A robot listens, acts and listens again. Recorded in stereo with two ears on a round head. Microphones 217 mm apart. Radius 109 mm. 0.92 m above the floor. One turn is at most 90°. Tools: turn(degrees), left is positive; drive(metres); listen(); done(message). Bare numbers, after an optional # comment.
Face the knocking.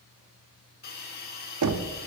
turn(-90)
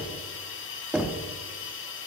done("Facing the knocking, under 1 m away.")